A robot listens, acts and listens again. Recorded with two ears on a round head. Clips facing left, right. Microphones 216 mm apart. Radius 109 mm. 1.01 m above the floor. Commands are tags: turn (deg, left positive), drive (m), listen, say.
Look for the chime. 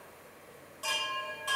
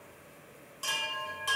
<turn deg="-30"/>
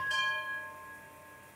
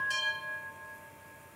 <turn deg="-110"/>
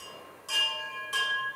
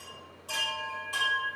<turn deg="20"/>
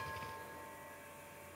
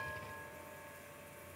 <listen/>
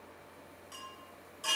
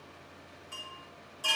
<say>Facing the chime.</say>